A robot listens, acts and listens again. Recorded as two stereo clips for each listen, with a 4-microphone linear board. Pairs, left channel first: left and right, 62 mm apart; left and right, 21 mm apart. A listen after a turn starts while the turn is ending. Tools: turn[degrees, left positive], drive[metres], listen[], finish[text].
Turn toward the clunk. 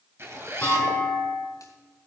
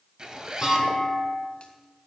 Thought: The clunk: about 25° left or 155° left.
Action: turn[25]
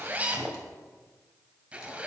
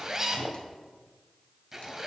Action: listen[]
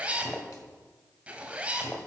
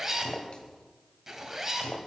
Action: finish[I heard a clunk, but can't make it out now. It was about straight ahead or 130° left.]